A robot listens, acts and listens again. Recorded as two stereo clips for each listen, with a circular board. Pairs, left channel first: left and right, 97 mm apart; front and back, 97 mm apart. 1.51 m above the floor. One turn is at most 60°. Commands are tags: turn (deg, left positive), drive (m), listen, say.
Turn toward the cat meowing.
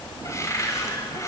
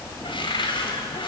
<listen/>
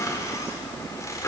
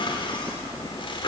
<listen/>
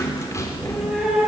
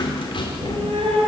<turn deg="-60"/>
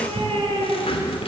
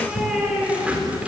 <turn deg="-60"/>
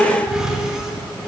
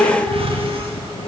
<turn deg="-10"/>
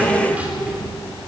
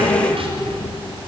<listen/>
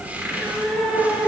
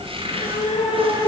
<say>Found it: a cat meowing, straight ahead.</say>